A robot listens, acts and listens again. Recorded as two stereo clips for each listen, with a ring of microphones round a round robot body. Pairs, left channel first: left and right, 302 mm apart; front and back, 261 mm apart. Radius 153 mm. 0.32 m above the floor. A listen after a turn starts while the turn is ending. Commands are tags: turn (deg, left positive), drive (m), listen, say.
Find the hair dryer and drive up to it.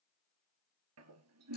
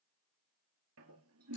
<listen/>
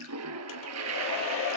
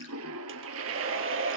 <turn deg="140"/>
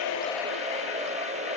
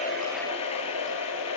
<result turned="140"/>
<turn deg="-20"/>
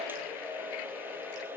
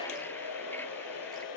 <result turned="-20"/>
<drive m="1.0"/>
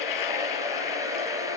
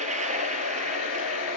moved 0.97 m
<turn deg="-10"/>
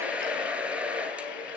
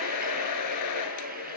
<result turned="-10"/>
<drive m="1.0"/>
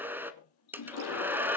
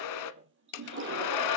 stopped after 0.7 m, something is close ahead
<say>Arrived at the hair dryer, straight ahead.</say>